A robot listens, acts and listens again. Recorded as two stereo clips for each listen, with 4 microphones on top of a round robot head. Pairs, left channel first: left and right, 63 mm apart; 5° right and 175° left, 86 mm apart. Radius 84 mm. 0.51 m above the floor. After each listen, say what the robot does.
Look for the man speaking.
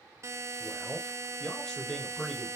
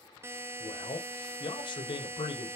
Found it: a man speaking, straight ahead.